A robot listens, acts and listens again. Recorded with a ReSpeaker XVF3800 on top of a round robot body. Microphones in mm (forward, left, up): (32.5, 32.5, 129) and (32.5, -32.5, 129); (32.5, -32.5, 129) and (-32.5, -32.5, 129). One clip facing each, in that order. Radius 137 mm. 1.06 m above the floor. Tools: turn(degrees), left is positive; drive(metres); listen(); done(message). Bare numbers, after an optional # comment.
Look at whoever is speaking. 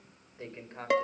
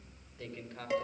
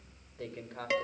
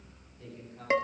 # The man speaking: 30° left.
turn(30)
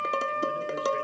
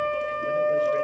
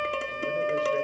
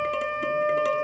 listen()
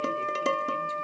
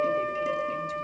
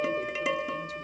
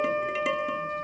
listen()
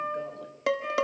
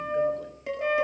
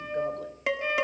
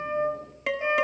done("Facing where the man speaking came from. I can't hear it now.")